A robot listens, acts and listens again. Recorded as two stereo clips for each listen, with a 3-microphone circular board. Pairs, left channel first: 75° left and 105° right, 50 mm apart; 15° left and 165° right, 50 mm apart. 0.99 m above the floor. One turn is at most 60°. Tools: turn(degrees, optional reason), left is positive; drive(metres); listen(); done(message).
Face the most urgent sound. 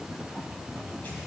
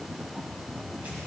listen()
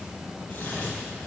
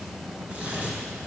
listen()
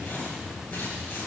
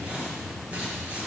done("I can't make out anything urgent, only tearing paper.")